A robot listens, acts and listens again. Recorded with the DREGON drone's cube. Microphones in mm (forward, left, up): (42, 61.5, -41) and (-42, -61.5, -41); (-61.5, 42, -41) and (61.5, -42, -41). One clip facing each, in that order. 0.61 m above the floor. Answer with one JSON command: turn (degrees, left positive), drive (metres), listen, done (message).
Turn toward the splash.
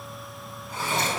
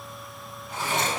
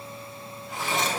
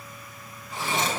{"turn": 165}
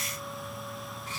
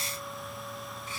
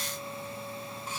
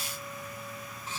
{"done": "Facing where the splash came from. I can't hear it now."}